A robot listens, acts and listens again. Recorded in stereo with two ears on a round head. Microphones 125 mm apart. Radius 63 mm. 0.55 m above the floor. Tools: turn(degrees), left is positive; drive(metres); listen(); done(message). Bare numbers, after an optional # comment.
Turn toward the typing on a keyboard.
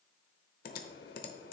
# The typing on a keyboard: about 75° left or 105° left.
turn(75)
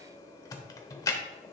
# So it is at 25° left.
turn(25)
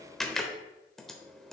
done("Facing the typing on a keyboard, under 1 m away.")